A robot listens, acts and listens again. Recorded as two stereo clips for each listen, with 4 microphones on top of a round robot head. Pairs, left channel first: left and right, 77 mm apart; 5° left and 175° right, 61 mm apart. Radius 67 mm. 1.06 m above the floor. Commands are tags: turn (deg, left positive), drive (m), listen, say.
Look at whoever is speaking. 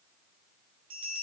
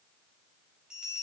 <listen/>
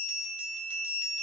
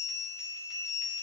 <listen/>
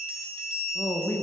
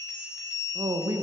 <turn deg="155"/>
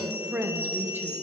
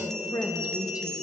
<turn deg="-25"/>
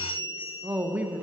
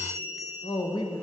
<turn deg="-20"/>
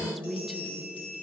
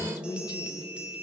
<say>Facing the woman speaking, under 1 m away.</say>